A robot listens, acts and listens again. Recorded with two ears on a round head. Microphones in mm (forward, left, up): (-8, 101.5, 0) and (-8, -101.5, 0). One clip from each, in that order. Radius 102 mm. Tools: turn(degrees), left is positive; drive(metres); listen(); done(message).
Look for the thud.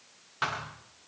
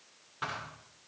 turn(degrees=35)
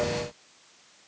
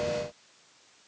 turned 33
listen()
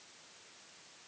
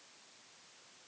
done("I heard a thud, but can't make it out now. It was about straight ahead or 115° left.")